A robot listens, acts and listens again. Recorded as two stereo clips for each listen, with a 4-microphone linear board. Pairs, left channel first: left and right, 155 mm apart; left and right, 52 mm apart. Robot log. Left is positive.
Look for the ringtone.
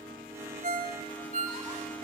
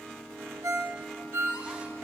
note: The ringtone: about 65° right or 115° right.
cmd yaw -65
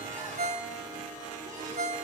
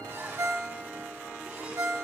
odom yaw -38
note: So it is at 75° right.
cmd yaw -75
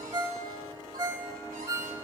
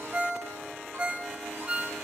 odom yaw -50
note: The ringtone is now 25° right.
cmd yaw -25
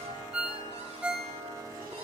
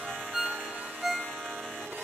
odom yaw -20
note: The ringtone is now 10° right.
cmd yaw -10
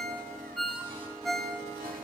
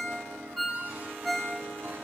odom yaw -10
end: Found it: a ringtone, straight ahead.